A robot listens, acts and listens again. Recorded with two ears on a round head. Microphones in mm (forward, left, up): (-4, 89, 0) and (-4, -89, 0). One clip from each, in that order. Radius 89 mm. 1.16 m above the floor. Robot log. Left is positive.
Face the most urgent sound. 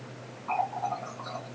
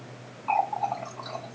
cmd idle
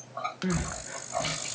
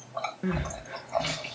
cmd yaw -30
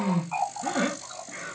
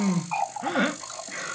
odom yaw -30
note: So it is at 145° right.
cmd yaw -145
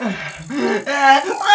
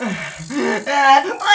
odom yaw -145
end: Facing the crying, under 1 m away.